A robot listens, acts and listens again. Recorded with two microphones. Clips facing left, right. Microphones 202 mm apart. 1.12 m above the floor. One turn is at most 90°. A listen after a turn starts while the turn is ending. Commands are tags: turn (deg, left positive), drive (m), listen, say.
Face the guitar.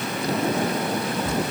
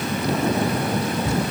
<listen/>
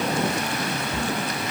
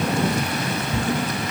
<listen/>
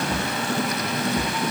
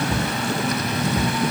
<say>I can't make out a guitar, only a cupboard door.</say>